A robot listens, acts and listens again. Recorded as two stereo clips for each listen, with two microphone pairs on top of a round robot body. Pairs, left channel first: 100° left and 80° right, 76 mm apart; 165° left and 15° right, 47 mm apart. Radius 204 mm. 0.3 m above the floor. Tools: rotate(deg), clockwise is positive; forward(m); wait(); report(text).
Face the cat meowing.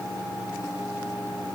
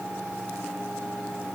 wait()
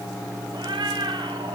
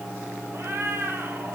rotate(55)
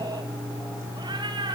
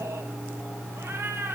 rotate(50)
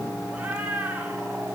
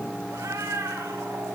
report("Facing the cat meowing, 2 to 4 m away.")